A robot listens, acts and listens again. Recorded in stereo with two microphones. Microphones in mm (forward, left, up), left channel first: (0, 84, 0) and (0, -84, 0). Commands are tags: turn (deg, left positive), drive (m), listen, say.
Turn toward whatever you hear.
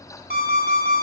<turn deg="-70"/>
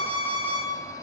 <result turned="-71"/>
<turn deg="-15"/>
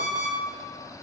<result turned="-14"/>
<say>Facing the alarm clock.</say>